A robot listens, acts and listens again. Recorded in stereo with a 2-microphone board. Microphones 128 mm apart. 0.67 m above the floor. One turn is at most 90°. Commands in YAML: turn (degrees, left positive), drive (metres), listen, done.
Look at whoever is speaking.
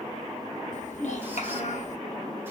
turn: 65
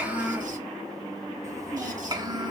turn: -35
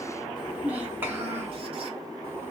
turn: -15
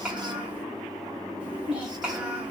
turn: -10
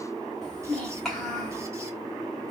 done: "Facing the child speaking."